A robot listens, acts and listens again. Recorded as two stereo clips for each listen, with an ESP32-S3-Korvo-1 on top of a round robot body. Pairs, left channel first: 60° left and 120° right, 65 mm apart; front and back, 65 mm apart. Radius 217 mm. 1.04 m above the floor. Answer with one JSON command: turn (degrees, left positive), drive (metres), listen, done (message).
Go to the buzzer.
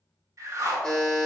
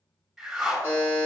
{"turn": -10}
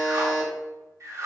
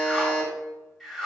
{"drive": 1.0}
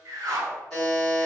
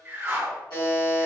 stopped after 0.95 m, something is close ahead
{"done": "I am next to the buzzer."}